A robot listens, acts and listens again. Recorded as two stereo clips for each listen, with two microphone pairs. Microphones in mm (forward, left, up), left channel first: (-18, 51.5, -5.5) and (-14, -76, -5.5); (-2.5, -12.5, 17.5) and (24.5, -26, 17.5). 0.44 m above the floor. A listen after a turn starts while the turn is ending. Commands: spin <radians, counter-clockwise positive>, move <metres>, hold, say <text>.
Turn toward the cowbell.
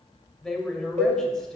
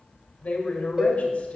spin -1.48
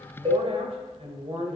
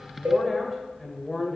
hold
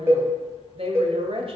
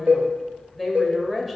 spin -0.35
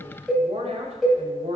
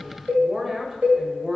say Found it: a cowbell, straight ahead.